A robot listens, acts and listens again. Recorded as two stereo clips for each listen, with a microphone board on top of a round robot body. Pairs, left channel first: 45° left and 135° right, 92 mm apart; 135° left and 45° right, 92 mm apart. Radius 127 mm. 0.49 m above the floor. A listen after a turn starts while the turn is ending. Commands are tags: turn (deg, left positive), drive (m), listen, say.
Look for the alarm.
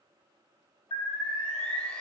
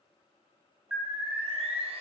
<turn deg="40"/>
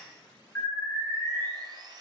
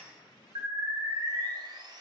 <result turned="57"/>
<turn deg="-15"/>
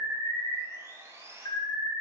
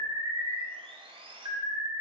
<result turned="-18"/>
<say>Facing the alarm, 2 to 4 m away.</say>